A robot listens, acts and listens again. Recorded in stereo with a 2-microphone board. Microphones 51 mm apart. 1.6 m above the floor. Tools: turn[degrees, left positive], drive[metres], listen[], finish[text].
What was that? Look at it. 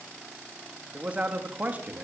Thought: The man speaking: about 35° right or 145° right.
Action: turn[-35]
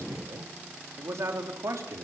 Thought: So it is at 95° right.
Action: turn[-95]
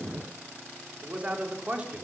Thought: The man speaking is now 25° right.
Action: turn[-25]
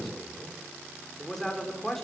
Action: finish[Found it: a man speaking, straight ahead, over 4 m away.]